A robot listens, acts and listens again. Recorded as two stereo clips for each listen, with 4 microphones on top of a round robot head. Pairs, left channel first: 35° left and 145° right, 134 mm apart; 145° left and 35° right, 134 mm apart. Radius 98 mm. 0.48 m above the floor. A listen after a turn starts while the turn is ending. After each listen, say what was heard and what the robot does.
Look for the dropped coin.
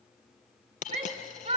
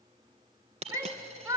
Found it: a dropped coin, straight ahead.